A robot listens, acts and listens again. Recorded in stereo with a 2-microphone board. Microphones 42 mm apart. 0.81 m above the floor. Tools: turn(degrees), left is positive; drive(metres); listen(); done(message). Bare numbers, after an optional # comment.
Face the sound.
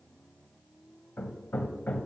# The hammering: about 45° left or 135° left.
turn(45)
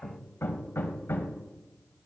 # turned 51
# So it is at 80° left.
turn(80)
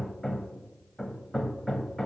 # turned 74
done("Facing the hammering.")